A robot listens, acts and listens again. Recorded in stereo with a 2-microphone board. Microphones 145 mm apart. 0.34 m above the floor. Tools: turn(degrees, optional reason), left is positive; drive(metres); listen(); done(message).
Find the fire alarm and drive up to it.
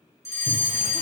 turn(degrees=20, reason="The fire alarm: about 20° left or 160° left.")
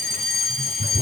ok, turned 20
drive(metres=1.0)
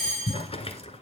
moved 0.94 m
drive(metres=1.0)
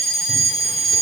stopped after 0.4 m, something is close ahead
done("Blocked. The fire alarm is further on, straight ahead.")